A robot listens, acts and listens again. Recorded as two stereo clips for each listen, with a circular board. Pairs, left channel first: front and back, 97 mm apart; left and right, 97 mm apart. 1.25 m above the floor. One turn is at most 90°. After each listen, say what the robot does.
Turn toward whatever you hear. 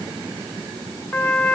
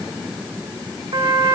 Turn 65° right.
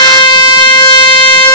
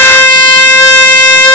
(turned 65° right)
Turn 30° left.
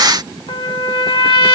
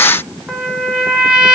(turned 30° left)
Turn 10° right.
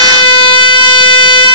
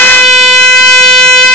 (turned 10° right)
Facing the trumpet.